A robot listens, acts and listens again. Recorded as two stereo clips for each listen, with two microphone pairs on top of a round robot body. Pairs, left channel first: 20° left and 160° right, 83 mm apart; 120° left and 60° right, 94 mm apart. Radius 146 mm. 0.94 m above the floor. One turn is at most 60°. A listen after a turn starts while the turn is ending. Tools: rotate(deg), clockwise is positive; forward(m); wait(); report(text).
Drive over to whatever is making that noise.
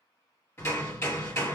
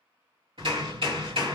rotate(40)
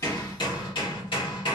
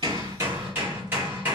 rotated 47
rotate(-10)
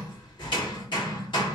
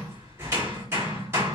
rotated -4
forward(1.0)
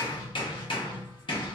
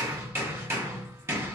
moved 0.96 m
forward(1.0)
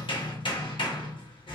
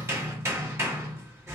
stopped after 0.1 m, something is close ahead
report("Arrived at the hammering, straight ahead.")